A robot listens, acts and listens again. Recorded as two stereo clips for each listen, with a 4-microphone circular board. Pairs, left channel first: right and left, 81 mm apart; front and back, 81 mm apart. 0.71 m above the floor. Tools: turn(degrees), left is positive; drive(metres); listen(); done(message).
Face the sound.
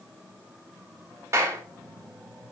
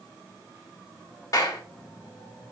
turn(degrees=40)
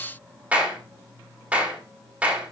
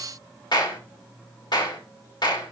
turn(degrees=15)
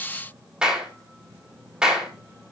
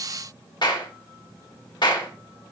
turn(degrees=10)
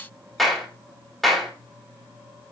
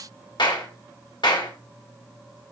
done("Found it: a clap, straight ahead.")